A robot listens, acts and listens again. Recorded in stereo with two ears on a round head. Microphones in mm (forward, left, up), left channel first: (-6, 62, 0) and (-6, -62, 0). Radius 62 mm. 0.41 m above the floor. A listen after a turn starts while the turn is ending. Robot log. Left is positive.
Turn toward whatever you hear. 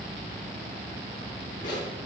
note: The zipper: about 65° left or 115° left.
cmd yaw +65
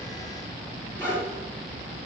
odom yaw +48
note: So it is at 20° left.
cmd yaw +20
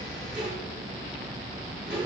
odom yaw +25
end: Facing the zipper, over 4 m away.